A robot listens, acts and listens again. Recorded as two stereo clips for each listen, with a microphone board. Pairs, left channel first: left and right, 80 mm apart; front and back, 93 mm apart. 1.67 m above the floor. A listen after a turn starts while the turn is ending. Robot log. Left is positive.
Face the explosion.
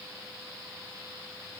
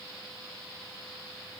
cmd idle
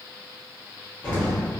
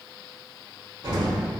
note: The explosion: 155° left.
cmd yaw +155
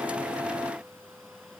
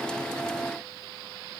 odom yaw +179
note: Nothing new. It was at 25° right.
cmd yaw -25
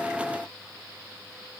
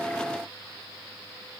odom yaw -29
end: I heard an explosion from this way, but can't make it out now.